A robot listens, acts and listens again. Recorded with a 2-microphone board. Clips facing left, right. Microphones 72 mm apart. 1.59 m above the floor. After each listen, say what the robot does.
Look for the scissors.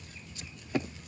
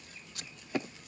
Turn 70° right.
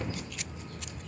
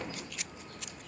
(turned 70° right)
Found it: scissors, straight ahead.